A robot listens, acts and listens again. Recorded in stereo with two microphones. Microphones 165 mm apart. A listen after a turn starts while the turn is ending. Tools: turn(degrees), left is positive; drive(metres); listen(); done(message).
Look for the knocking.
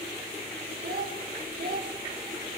listen()
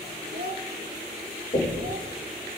turn(degrees=55)
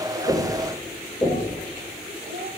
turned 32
turn(degrees=20)
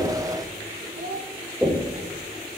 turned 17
done("Found it: knocking, straight ahead.")